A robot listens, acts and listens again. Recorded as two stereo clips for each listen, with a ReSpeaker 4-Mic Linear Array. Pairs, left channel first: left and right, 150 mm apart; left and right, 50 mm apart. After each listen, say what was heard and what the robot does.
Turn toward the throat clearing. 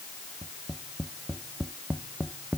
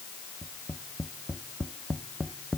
Keep listening.
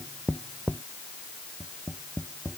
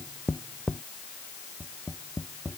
Keep listening.
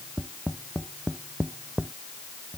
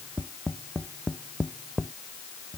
I can't make out throat clearing, only tapping.